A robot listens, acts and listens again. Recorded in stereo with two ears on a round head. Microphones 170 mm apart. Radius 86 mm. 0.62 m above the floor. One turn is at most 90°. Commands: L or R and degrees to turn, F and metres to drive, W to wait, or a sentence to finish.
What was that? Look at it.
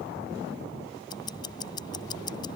L20
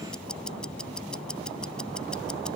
Facing the ticking.